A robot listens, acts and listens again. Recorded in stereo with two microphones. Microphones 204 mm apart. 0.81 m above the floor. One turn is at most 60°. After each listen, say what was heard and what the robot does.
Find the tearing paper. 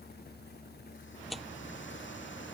Turn 30° left.
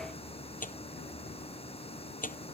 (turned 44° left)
So it is at 135° left. Turn 60° left.
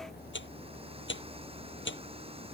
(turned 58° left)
The tearing paper is now 75° left. Turn 60° left.
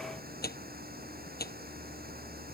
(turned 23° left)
The tearing paper is now 55° left. Turn 55° left.
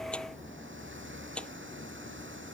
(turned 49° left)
Facing the tearing paper.